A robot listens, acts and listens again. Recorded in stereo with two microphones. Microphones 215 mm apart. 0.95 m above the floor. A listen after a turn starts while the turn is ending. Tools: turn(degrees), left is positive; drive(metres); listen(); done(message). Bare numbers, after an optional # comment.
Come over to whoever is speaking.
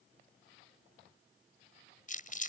listen()
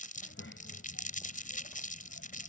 turn(90)
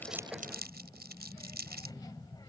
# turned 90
# So it is at 20° left.
turn(20)
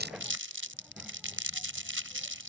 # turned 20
listen()
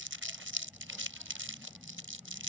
drive(1.0)
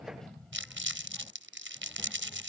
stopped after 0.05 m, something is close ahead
done("Something is in my way. I am facing the child speaking but have not reached it.")